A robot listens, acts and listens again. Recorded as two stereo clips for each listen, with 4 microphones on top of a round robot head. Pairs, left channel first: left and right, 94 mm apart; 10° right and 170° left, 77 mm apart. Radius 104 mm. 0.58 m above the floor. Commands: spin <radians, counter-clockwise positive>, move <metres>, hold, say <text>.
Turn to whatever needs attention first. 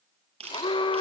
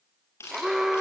spin 1.48
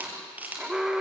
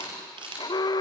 say Facing the alarm.